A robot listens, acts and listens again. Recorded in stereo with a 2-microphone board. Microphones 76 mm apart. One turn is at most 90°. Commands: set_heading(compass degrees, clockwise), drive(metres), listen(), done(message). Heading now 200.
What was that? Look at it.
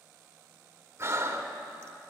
set_heading(235)
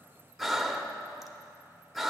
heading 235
done("Found it: breathing, straight ahead.")